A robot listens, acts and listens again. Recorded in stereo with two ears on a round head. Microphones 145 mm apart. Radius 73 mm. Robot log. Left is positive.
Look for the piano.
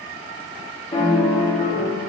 note: The piano: about 25° left or 155° left.
cmd yaw +25
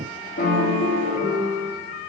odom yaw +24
note: So it is at 130° left.
cmd yaw +130
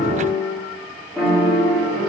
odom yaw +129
end: Facing the piano.